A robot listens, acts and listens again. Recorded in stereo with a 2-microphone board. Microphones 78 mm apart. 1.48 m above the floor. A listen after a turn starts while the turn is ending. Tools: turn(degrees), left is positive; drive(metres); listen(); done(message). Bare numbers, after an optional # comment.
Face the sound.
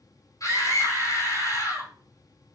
# The scream: about 45° left or 135° left.
turn(45)
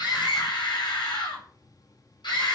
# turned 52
# So it is at 85° left.
turn(85)
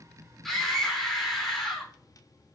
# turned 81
done("Found it: a scream, straight ahead, over 4 m away.")